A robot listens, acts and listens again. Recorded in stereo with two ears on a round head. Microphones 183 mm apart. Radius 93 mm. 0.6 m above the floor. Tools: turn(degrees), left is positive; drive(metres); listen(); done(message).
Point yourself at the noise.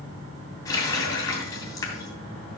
turn(degrees=15)
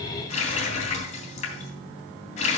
turn(degrees=145)
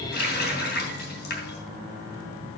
turn(degrees=50)
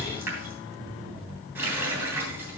turn(degrees=-10)
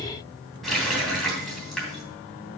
done("Facing the running tap, 2 to 4 m away.")